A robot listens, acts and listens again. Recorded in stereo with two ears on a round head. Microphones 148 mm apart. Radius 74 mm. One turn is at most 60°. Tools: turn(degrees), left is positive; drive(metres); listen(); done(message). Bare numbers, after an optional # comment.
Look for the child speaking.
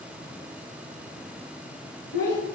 # The child speaking: about 60° left or 120° left.
turn(60)
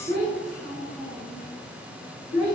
# So it is at 50° left.
turn(50)
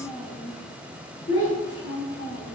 # The child speaking is now 30° left.
turn(30)
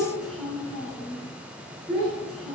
done("Found it: a child speaking, straight ahead, over 4 m away.")